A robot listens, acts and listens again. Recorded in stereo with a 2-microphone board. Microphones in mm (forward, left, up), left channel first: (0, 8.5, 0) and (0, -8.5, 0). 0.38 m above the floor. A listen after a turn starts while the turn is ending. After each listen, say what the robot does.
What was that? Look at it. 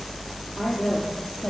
Turn 60° left.
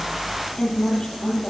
Turn 55° left.
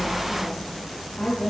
Turn 25° left.
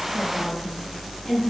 Facing the woman speaking, over 4 m away.